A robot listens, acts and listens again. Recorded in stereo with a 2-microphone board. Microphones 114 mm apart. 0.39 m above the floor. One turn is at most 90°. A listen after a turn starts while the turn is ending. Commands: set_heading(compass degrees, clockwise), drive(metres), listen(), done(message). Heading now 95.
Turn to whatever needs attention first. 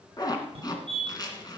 set_heading(150)
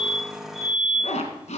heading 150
set_heading(160)
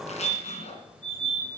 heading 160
done("Facing the fire alarm.")